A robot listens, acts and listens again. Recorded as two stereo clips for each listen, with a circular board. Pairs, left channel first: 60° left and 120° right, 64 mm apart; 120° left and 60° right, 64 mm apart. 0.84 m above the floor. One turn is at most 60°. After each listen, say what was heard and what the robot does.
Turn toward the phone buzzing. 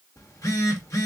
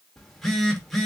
The phone buzzing: 35° left. Turn 35° left.
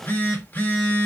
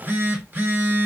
Facing the phone buzzing, under 1 m away.